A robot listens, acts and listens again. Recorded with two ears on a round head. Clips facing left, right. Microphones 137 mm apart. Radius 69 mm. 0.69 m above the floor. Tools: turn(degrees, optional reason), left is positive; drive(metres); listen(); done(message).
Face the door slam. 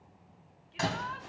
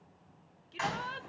turn(degrees=45, reason="The door slam: about 45° left or 135° left.")
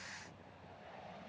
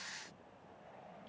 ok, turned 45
listen()
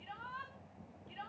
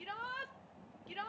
done("I heard a door slam, but can't make it out now. It was about straight ahead or 90° left.")